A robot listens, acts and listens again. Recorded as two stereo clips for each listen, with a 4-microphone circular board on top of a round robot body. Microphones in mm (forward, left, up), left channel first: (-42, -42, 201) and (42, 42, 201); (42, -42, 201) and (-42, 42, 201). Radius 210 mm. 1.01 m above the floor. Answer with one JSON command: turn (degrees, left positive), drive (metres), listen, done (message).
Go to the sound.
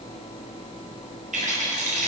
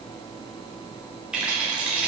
{"turn": 55}
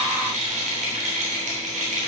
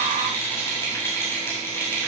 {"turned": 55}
{"turn": 25}
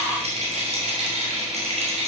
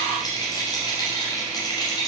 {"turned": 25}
{"turn": 15}
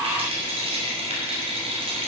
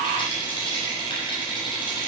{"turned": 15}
{"drive": 1.0}
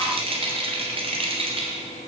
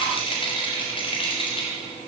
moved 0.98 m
{"drive": 1.0}
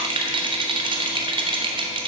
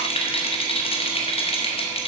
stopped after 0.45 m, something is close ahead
{"done": "I am next to the rattle."}